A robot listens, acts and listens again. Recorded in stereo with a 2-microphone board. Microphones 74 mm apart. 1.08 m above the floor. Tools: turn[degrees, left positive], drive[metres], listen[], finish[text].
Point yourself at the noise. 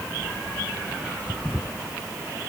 Action: listen[]
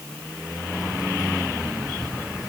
Action: turn[-30]
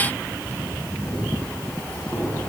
Thought: So it is at 25° left.
Action: turn[25]
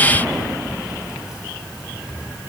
Thought: The keys jangling is now 10° right.
Action: turn[-10]
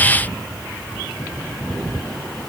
Action: finish[Facing the keys jangling, over 4 m away.]